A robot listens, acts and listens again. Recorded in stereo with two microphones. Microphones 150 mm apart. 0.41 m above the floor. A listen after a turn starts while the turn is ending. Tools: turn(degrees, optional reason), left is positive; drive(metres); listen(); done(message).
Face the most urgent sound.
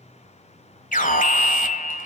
turn(degrees=65, reason="The alarm: about 65° left or 115° left.")
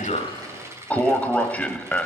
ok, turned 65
turn(degrees=10, reason="So it is at 10° left.")
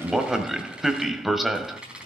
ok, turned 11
done("Facing the alarm.")